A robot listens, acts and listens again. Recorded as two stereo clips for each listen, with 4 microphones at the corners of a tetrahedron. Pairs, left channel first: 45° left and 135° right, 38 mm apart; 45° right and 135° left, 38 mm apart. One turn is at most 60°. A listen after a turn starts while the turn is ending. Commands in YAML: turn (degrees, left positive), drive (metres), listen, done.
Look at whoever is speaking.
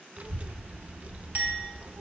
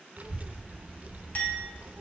turn: 60
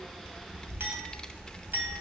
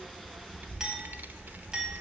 turn: 60
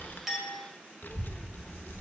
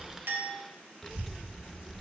turn: 35
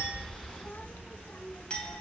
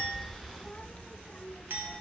turn: 10
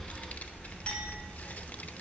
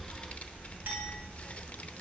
done: "Facing the child speaking, under 1 m away."